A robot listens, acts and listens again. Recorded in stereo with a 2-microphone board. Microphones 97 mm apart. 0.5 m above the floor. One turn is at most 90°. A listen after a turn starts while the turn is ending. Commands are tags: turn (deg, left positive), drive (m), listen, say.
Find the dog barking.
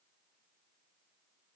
<listen/>
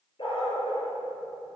<turn deg="60"/>
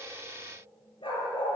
<turn deg="60"/>
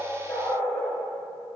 <turn deg="15"/>
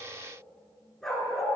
<say>Found it: a dog barking, straight ahead.</say>